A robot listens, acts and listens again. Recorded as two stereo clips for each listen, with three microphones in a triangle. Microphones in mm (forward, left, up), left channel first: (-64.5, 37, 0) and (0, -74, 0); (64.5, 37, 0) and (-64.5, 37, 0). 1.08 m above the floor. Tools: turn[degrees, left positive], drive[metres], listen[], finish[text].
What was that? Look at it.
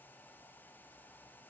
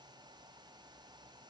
Action: listen[]
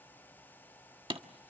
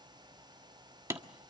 Thought: The hammering: 110° right.
Action: turn[-110]
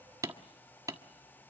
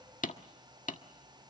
Action: finish[Facing the hammering, 1 to 2 m away.]